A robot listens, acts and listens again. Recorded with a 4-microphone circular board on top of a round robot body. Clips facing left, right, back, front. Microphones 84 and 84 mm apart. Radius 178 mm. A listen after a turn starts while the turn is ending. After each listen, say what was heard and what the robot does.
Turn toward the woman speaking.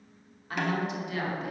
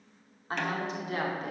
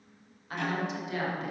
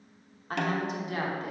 The woman speaking: 50° right. Turn 50° right.
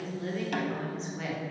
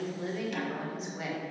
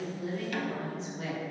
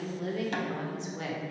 The woman speaking is now 10° right. Turn 10° right.
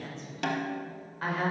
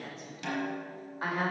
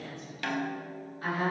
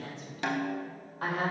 The woman speaking is now 10° right. Turn 10° right.
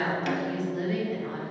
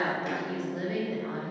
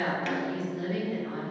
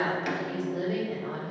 Found it: a woman speaking, straight ahead.